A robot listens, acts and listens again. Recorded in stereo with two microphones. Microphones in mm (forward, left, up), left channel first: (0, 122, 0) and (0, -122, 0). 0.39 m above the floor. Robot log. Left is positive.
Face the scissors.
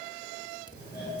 note: The scissors: about 20° left or 160° left.
cmd yaw +20
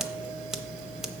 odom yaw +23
cmd idle
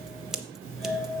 end: Found it: scissors, straight ahead.